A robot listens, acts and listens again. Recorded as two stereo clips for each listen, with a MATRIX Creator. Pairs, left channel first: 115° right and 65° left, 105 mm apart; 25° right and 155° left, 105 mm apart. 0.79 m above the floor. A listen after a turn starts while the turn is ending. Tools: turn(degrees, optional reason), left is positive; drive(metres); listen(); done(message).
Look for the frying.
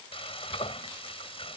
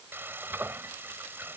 turn(degrees=-135, reason="The frying: 135° right.")
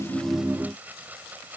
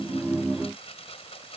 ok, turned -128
done("Facing the frying.")